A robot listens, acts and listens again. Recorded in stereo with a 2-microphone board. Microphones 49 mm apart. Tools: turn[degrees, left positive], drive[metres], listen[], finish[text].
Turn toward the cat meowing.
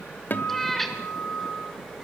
Action: turn[30]
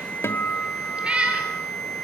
Thought: So it is at 25° right.
Action: turn[-25]
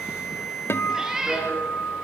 Thought: The cat meowing is now 15° right.
Action: turn[-15]
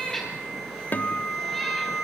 Action: finish[Found it: a cat meowing, straight ahead.]